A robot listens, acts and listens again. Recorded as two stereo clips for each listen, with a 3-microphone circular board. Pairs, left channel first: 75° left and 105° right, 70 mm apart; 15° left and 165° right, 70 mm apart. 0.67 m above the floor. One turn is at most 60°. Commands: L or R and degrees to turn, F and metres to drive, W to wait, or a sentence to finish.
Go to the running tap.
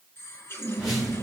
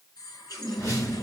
L20
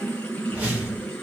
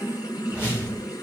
F1.0
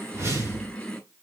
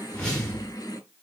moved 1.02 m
F1.0
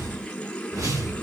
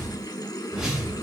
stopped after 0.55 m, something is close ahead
Arrived at the running tap, straight ahead.